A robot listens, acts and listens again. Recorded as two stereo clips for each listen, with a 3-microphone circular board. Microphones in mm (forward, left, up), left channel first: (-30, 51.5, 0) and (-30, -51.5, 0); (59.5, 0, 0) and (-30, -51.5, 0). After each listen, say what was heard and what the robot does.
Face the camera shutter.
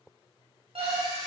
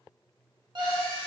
Facing the camera shutter.